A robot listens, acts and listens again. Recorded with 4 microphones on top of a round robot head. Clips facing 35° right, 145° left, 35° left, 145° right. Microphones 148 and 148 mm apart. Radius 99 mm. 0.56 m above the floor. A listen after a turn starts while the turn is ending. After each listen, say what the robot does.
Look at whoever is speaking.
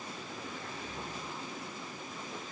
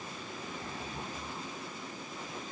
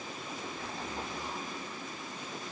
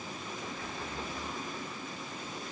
Keep listening.
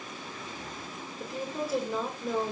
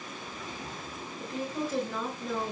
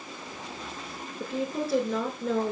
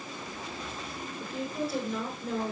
Turn 45° left.
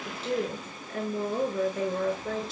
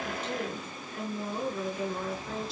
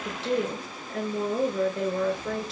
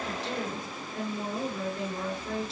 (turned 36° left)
Turn 10° left.
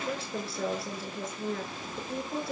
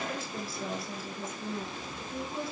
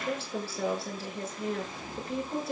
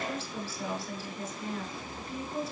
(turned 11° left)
Found it: a woman speaking, straight ahead, over 4 m away.